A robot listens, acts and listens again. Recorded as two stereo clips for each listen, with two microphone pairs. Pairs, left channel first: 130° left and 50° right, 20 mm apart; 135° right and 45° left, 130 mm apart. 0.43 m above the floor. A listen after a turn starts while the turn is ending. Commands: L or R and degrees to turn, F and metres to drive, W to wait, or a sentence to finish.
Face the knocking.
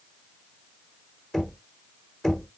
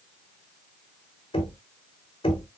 R175
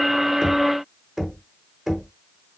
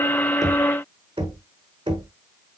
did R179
Facing the knocking, 1 to 2 m away.